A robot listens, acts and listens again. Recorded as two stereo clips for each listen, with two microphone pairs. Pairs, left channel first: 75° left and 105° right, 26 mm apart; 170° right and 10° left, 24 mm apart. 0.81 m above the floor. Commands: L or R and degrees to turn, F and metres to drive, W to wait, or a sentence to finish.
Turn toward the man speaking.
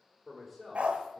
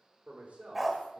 R20
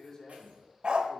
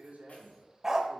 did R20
Facing the man speaking.